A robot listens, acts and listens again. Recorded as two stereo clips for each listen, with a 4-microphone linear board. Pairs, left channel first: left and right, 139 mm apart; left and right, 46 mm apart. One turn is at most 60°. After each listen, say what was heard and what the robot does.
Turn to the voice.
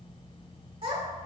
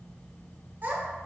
The child speaking: about 45° right or 135° right. Turn 45° right.
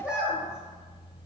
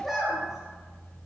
So it is at 10° right. Turn 10° right.
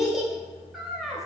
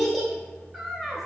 Found it: a child speaking, straight ahead.